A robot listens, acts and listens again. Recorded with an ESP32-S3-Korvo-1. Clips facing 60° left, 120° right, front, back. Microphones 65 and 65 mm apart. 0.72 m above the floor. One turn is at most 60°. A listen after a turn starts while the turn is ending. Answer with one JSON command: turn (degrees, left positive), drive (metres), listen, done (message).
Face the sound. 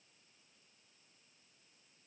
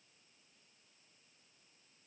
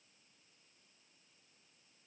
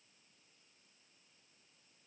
{"listen": true}
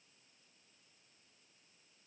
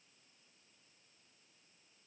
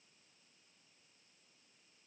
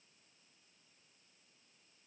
{"listen": true}
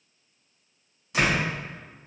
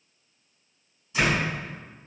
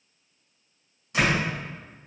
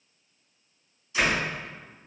{"turn": 35}
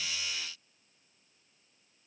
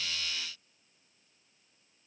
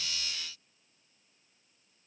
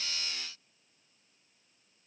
{"done": "Facing where the door slam came from. I can't hear it now."}